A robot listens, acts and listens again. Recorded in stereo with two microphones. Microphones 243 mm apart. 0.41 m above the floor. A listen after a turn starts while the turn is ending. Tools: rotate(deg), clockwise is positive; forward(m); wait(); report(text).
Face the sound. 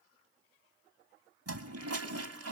rotate(75)
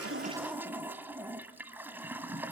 rotate(10)
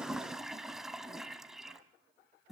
report("Facing the toilet flushing.")